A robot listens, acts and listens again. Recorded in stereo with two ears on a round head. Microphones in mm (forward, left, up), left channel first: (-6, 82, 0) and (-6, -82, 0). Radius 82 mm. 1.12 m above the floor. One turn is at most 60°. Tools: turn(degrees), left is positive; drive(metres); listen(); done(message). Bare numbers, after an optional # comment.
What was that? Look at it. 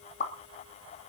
# The pop: about 40° left or 140° left.
turn(40)
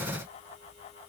listen()
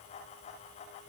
done("I heard a pop, but can't make it out now. It was about straight ahead or 100° left.")